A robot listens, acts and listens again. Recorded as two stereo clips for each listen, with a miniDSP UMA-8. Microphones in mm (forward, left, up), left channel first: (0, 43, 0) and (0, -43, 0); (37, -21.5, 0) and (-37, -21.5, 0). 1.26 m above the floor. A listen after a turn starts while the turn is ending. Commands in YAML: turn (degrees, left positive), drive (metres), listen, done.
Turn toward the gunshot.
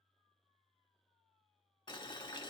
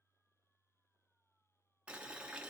listen: true
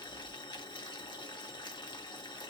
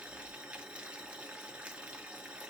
listen: true
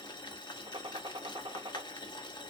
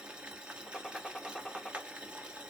turn: -85
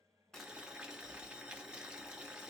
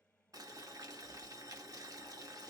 done: "Facing where the gunshot came from. I can't hear it now."